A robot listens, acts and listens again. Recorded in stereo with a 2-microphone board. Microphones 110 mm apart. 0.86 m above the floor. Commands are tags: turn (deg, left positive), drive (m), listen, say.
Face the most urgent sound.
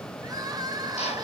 <turn deg="-35"/>
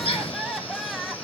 <say>Facing the crying.</say>